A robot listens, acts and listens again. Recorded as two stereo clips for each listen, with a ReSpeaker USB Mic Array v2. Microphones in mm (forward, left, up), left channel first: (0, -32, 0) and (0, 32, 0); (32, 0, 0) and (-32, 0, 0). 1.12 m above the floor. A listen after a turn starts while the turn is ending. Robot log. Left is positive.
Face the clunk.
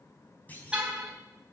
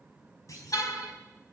note: The clunk: 25° right.
cmd yaw -25
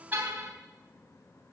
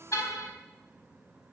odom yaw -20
end: Facing where the clunk came from. I can't hear it now.